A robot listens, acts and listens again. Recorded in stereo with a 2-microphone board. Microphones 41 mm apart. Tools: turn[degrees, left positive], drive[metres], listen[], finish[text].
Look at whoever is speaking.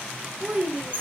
Thought: The child speaking: about 20° right or 160° right.
Action: turn[-20]
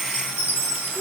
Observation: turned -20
Action: listen[]
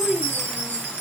Action: finish[Facing the child speaking, 1 to 2 m away.]